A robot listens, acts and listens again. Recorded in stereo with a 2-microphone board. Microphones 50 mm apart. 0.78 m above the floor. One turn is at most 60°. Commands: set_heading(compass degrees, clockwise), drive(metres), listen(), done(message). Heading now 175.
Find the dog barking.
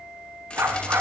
set_heading(235)
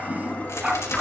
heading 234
set_heading(249)
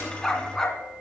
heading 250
set_heading(235)
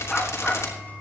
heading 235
set_heading(225)
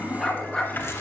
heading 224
set_heading(214)
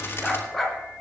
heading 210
done("Facing the dog barking.")